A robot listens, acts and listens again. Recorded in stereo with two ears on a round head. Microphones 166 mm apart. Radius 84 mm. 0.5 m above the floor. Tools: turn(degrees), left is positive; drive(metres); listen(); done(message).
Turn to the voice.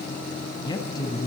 turn(degrees=25)
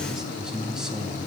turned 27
done("Facing the man speaking, over 4 m away.")